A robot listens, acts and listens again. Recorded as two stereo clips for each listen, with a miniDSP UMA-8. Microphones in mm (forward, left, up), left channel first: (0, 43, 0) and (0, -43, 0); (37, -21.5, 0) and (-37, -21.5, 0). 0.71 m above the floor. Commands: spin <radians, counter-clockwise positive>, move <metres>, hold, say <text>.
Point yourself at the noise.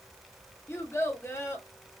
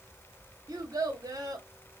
spin 2.62
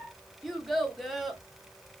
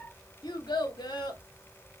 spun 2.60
say Facing the child speaking, 1 to 2 m away.